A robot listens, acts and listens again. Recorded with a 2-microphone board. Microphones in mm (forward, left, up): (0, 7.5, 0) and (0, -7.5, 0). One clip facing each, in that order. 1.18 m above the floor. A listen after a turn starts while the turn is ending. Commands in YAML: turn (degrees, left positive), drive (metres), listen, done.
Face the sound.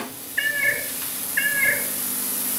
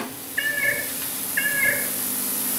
turn: -30
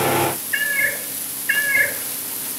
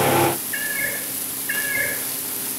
turn: 25
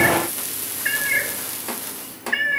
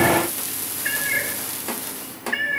done: "Found it: a cat meowing, straight ahead."